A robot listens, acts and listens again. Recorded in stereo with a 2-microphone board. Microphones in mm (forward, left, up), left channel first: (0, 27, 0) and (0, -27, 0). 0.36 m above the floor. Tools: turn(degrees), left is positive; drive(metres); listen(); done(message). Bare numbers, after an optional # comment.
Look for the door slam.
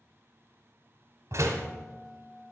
# The door slam: about 65° right or 115° right.
turn(-65)
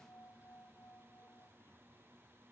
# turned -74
listen()
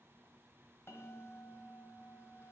done("I heard a door slam, but can't make it out now. It was about 10° left or 40° right.")